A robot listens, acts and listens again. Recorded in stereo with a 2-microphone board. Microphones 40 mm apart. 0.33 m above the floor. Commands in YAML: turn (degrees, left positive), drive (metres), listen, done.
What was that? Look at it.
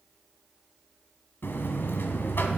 turn: 65
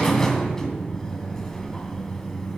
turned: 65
turn: 15
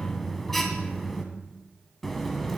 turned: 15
done: "Found it: a buzzer, straight ahead, 1 to 2 m away."